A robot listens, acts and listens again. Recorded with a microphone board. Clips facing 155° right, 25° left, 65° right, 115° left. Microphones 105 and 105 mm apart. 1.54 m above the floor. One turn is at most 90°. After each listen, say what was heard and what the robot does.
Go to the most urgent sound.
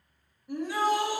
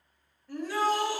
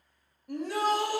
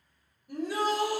The shout: 85° right. Turn 85° right.
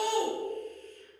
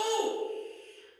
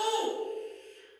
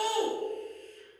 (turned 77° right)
The shout is now 10° right. Turn 10° right.
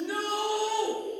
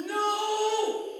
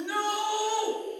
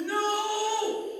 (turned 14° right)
Drive 1.0 m forward.
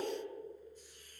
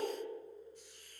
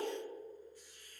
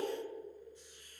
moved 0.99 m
Keep listening.
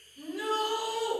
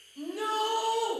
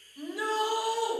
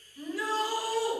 Drive 1.0 m forward.
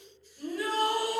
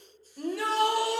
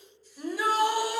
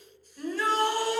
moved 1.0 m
The shout is now 10° left. Turn 10° left.
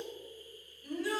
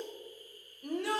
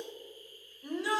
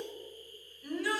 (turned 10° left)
Drive 1.0 m forward.
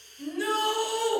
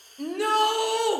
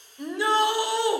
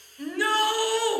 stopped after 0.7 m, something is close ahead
I am next to the shout.